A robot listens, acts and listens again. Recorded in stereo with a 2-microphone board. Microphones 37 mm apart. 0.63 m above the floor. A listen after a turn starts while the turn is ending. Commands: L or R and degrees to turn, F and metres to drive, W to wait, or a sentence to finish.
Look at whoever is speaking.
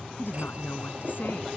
L75
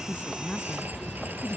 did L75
L30
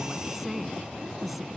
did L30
Found it: a woman speaking, straight ahead.